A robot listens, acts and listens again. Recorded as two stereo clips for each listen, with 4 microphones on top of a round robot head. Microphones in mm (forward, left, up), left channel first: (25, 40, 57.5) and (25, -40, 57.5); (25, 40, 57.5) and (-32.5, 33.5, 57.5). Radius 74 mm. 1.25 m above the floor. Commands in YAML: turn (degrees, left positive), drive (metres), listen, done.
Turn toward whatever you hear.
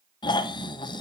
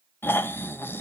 turn: 60
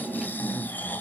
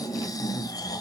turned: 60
turn: 20
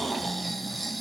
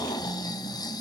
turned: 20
done: "Facing the snoring, under 1 m away."